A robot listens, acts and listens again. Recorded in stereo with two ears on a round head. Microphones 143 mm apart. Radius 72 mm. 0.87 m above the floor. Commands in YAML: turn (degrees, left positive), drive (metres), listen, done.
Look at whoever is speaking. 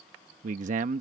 turn: -50
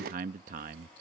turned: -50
turn: -65
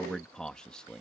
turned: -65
done: "Found it: a man speaking, straight ahead."